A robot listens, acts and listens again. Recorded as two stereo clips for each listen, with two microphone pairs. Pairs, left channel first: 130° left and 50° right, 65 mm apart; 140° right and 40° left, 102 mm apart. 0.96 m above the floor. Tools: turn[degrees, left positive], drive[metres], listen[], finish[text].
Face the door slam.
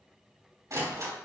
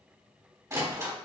Thought: The door slam: 20° right.
Action: turn[-20]
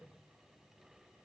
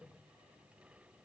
Action: finish[Facing where the door slam came from. I can't hear it now.]